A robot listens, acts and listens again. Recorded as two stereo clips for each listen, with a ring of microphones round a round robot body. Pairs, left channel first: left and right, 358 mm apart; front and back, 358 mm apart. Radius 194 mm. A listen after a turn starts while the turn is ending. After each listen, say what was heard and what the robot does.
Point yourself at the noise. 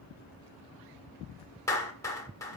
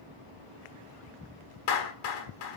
The clap: 10° left. Turn 10° left.
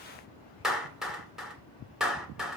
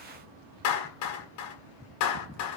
Facing the clap, 2 to 4 m away.